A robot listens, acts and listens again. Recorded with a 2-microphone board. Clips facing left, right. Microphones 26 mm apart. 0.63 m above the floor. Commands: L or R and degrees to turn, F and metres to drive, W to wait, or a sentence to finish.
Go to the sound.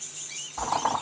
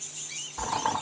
L50
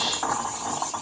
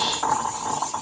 F1.0
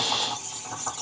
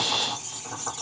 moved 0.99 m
L10
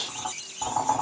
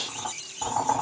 F1.0
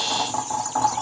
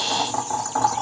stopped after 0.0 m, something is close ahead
R10
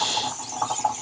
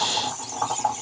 Arrived at the boiling, straight ahead.